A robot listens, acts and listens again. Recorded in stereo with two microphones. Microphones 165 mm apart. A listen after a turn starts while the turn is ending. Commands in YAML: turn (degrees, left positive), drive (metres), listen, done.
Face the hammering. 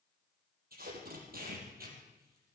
listen: true
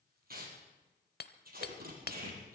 turn: 75
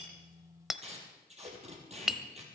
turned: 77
done: "Found it: hammering, straight ahead, under 1 m away."